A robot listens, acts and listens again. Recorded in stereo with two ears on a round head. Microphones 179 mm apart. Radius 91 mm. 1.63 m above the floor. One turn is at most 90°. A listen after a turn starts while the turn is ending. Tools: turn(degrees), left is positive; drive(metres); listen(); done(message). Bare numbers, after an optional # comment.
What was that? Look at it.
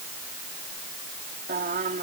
# The singing: about 45° right or 135° right.
turn(-45)
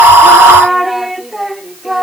done("Found it: singing, straight ahead.")